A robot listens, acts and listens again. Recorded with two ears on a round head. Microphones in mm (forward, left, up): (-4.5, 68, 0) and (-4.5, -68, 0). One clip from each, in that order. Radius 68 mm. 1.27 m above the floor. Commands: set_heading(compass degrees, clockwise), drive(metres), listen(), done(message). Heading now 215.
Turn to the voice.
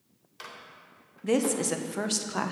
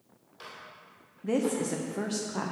set_heading(150)
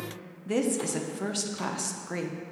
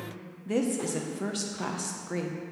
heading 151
set_heading(141)
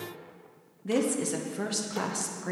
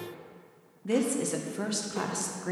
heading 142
done("Facing the woman speaking, under 1 m away.")